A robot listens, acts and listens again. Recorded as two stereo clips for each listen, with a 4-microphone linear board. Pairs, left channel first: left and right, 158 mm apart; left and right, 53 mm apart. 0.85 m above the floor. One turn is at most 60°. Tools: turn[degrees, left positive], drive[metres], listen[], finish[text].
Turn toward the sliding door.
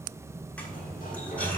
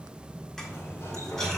Thought: The sliding door: about 60° left or 120° left.
Action: turn[60]
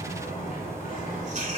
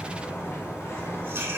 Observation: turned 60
Thought: So it is at 60° left.
Action: turn[60]
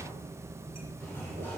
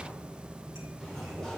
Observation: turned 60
Thought: The sliding door is now 15° left.
Action: turn[15]
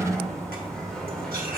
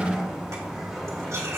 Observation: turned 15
Action: finish[Facing the sliding door.]